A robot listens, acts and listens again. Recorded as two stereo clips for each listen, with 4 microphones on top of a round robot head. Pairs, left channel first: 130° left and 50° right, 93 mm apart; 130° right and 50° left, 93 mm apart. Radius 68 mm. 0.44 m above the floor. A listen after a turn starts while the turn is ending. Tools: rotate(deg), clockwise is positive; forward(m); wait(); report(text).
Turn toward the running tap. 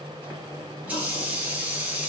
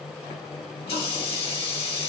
rotate(125)
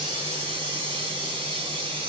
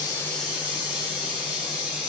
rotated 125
rotate(30)
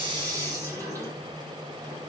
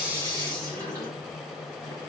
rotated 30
report("Facing the running tap, 2 to 4 m away.")